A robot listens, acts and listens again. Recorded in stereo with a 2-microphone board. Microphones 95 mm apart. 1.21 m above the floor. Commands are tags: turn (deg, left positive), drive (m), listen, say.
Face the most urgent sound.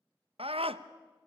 <turn deg="-90"/>
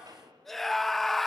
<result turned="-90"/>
<say>Facing the scream.</say>